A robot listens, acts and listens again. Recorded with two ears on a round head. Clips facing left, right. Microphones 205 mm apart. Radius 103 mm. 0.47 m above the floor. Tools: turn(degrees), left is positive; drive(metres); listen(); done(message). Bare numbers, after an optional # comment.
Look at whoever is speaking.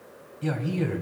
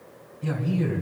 # The man speaking: about 65° left or 115° left.
turn(65)
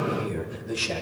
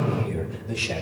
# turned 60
# So it is at 15° left.
turn(15)
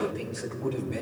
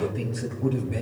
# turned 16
done("Found it: a man speaking, straight ahead, 2 to 4 m away.")